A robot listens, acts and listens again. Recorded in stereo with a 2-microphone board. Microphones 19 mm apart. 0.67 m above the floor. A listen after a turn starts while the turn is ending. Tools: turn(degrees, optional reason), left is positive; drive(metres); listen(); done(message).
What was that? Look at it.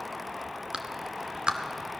turn(degrees=-65, reason="The clap: about 65° right or 115° right.")
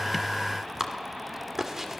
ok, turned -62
turn(degrees=-30, reason="So it is at 30° right.")
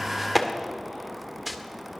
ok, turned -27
done("Found it: a clap, straight ahead.")